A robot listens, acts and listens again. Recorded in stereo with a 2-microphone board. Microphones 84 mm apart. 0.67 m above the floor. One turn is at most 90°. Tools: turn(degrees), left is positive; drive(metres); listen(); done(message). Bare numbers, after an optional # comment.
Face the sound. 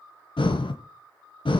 turn(90)
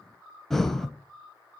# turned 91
done("Facing the breathing, 1 to 2 m away.")